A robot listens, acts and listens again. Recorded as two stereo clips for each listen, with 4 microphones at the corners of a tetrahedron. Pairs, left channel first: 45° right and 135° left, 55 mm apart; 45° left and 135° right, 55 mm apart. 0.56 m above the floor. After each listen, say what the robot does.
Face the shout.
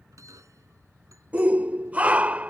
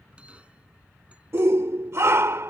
Turn 165° right.
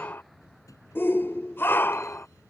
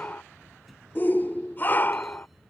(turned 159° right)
Found it: a shout, straight ahead.